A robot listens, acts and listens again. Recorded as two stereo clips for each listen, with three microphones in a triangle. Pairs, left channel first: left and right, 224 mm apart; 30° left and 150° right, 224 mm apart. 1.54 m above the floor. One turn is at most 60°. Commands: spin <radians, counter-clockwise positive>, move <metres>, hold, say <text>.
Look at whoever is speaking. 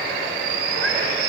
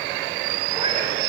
hold
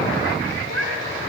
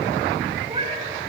hold
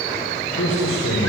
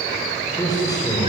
spin 1.05
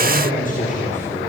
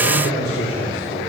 spin 0.61
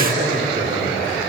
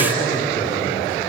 spin -0.70
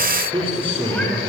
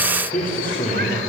spin -0.44
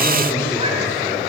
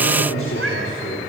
spin 0.17
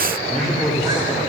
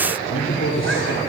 say Facing the man speaking, 2 to 4 m away.